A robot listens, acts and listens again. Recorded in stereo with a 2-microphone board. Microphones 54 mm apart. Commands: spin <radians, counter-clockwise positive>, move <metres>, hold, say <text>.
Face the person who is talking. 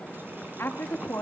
spin 0.87
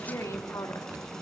spin 1.13
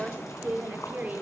spin -0.52
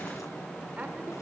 hold
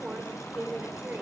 spin -0.52
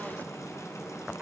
spin -0.35
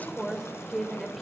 say Found it: a woman speaking, straight ahead, over 4 m away.